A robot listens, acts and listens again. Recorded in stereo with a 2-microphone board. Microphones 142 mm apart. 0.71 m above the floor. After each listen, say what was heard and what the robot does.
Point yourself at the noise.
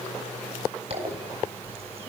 The zipper: about 45° right or 135° right. Turn 45° right.
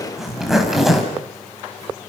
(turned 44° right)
Found it: a zipper, straight ahead, over 4 m away.